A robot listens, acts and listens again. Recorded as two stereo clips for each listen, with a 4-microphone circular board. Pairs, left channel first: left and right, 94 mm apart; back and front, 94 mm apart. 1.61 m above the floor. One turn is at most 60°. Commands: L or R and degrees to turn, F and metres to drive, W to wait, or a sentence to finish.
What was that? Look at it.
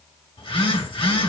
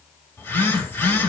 L60
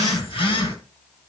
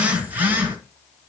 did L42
L60
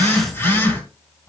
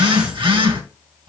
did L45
L30
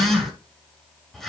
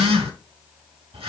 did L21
Found it: a phone buzzing, straight ahead, 2 to 4 m away.